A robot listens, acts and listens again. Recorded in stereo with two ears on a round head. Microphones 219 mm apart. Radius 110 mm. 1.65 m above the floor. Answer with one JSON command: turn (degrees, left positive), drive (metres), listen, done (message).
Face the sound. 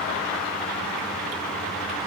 {"listen": true}
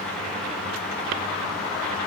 {"listen": true}
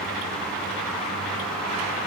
{"done": "I can't make out anything."}